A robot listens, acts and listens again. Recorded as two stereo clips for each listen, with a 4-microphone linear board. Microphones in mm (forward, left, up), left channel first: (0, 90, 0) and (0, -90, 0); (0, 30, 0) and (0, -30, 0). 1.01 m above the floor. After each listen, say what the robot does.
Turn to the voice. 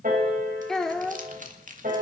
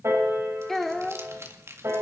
Turn 30° left.
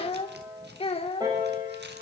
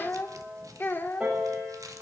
Turn 145° left.
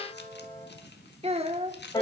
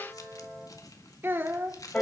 Turn 35° right.
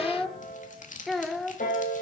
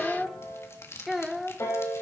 Facing the child speaking, 1 to 2 m away.